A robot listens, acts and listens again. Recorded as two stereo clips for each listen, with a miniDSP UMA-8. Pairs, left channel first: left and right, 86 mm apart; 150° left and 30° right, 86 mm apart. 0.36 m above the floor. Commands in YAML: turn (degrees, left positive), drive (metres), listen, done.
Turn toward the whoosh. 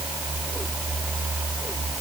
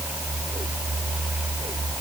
listen: true
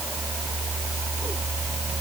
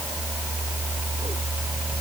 listen: true
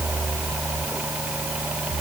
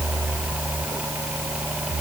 done: "I can't make out a whoosh."